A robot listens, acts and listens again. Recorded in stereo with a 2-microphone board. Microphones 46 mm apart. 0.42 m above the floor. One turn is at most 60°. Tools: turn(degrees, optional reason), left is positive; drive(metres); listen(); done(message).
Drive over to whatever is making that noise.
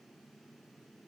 listen()
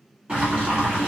turn(degrees=-25, reason="The boiling: about 25° right or 155° right.")
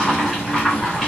drive(metres=1.0)
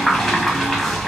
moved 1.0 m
drive(metres=1.0)
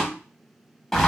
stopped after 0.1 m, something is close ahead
done("Arrived at the boiling, straight ahead.")